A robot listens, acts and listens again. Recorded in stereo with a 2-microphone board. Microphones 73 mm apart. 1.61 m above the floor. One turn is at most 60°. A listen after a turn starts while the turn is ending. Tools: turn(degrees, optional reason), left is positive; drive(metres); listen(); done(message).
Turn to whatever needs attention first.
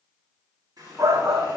turn(degrees=-45, reason="The shout: about 45° right or 135° right.")
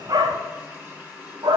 turn(degrees=-60, reason="So it is at 90° right.")
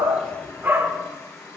turn(degrees=-30, reason="The shout is now 30° right.")
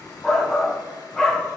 turn(degrees=10, reason="The shout is now 10° left.")
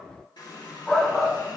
done("Facing the shout.")